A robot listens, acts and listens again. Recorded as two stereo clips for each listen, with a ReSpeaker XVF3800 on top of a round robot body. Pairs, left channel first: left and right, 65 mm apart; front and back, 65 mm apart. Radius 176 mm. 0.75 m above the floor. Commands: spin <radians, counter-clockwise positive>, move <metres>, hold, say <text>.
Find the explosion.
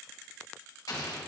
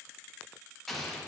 spin 1.48
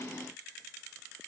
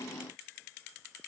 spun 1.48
say I heard an explosion from this way, but can't make it out now.